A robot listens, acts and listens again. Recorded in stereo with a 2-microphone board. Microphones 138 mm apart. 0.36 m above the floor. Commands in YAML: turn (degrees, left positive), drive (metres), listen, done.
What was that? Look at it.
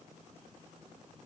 listen: true
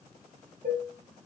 turn: -65
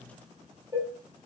turn: -25
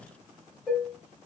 done: "Found it: dishes clattering, straight ahead, 1 to 2 m away."